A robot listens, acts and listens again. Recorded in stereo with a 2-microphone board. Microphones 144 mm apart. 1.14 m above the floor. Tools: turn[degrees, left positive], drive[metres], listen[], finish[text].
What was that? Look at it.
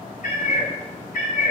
Thought: The cat meowing: about 75° left or 105° left.
Action: turn[75]
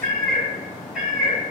Action: finish[Facing the cat meowing, 2 to 4 m away.]